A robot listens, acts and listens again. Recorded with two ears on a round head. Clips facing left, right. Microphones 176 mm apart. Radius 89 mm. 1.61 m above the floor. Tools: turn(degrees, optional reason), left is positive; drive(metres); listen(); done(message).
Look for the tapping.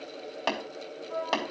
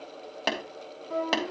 turn(degrees=-20, reason="The tapping: about 20° right or 160° right.")
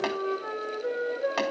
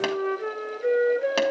turn(degrees=-140, reason="So it is at 140° right.")
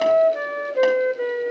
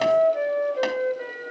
listen()
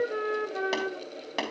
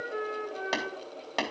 done("Facing the tapping, 2 to 4 m away.")